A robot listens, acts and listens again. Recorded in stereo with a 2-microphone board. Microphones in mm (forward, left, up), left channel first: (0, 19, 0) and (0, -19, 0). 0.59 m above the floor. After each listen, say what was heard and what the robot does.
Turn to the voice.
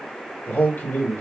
The man speaking: about 50° left or 130° left. Turn 50° left.
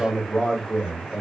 Facing the man speaking.